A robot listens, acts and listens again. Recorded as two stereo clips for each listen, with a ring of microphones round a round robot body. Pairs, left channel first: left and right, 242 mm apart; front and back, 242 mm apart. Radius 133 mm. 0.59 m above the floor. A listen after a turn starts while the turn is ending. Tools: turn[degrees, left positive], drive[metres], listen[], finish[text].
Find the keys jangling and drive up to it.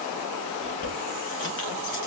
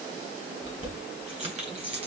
Thought: The keys jangling: 115° left.
Action: turn[115]
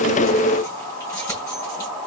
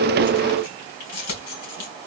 Thought: The keys jangling is now 10° left.
Action: turn[10]
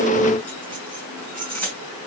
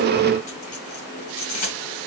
Action: drive[1.0]
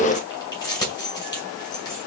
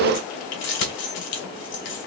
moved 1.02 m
Thought: The keys jangling is now 15° left.
Action: turn[15]
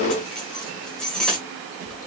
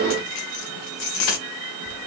Action: drive[1.0]
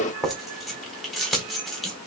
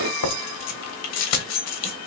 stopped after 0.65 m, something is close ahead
Action: finish[Arrived at the keys jangling, straight ahead.]